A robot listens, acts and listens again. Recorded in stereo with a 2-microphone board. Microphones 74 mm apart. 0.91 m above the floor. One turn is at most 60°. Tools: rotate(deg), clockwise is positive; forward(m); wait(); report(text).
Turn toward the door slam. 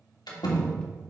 rotate(-60)
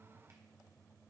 rotate(-30)
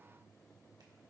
report("I heard a door slam from this way, but can't make it out now.")